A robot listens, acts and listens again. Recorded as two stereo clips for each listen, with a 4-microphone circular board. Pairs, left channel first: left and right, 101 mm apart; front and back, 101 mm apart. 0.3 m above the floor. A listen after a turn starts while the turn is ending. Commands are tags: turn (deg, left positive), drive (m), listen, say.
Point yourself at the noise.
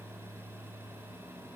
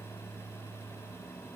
<listen/>
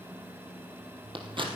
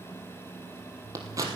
<turn deg="-125"/>
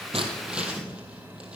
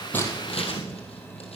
<turn deg="-10"/>
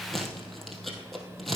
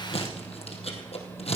<say>Found it: scissors, straight ahead.</say>